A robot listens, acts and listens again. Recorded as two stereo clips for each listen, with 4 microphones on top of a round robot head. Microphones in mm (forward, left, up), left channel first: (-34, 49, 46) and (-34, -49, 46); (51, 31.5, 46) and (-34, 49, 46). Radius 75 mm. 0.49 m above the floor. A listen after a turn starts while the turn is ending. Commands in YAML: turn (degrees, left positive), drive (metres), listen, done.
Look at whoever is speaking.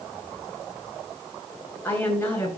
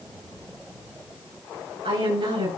turn: 160
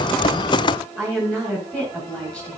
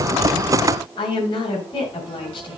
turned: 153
done: "Facing the woman speaking."